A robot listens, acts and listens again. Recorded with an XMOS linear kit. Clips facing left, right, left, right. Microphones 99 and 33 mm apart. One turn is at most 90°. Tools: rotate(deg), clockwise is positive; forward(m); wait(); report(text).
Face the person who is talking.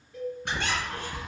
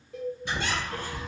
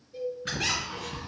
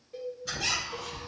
wait()
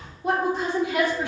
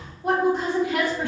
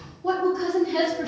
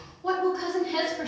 rotate(50)
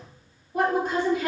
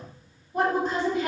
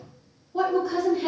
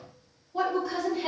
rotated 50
report("Facing the woman speaking.")